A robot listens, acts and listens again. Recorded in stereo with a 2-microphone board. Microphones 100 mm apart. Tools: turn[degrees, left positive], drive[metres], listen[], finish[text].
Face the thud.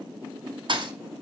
Thought: The thud: about 55° right or 125° right.
Action: turn[-55]
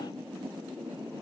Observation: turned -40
Action: listen[]
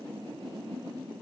Action: finish[I heard a thud, but can't make it out now. It was about 15° right or 85° right.]